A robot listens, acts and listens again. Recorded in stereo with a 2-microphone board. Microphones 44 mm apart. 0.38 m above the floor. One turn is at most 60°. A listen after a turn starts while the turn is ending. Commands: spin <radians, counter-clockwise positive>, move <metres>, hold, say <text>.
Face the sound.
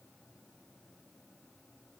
hold
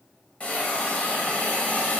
spin 0.52
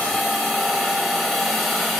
say Found it: a hiss, straight ahead, under 1 m away.